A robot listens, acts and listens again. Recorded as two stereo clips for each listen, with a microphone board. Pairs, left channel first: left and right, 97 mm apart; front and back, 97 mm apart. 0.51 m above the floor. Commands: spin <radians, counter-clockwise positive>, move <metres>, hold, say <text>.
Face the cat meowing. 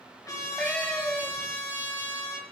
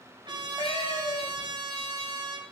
spin 0.17
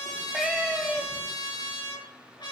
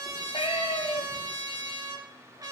say Found it: a cat meowing, straight ahead, 2 to 4 m away.